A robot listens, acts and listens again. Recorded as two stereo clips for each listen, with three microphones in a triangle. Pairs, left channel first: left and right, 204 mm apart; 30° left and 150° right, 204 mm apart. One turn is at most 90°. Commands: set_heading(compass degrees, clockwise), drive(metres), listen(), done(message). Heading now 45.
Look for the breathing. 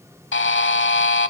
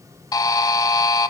listen()
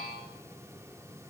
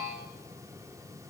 listen()
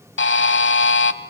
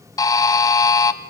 done("I can't make out breathing, only a buzzer.")